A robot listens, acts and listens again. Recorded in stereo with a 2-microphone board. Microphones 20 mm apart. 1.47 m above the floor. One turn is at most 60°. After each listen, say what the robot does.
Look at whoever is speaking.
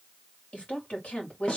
Turn 60° left.
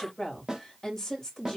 Turn 30° left.
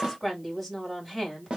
Facing the woman speaking.